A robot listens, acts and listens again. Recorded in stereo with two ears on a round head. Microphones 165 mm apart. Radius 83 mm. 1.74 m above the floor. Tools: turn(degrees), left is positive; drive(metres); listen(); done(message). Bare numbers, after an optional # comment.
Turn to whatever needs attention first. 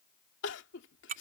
# The crying: about 70° left or 110° left.
turn(70)
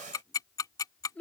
# So it is at 10° left.
turn(10)
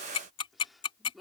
listen()
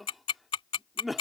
done("Found it: crying, straight ahead.")